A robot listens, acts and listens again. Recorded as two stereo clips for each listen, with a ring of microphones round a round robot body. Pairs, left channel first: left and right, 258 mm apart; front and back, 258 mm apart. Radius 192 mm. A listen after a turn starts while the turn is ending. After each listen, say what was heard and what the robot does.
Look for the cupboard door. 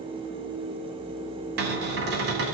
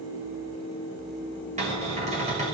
The cupboard door: 115° right. Turn 115° right.
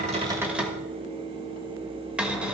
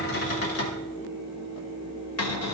Found it: a cupboard door, straight ahead.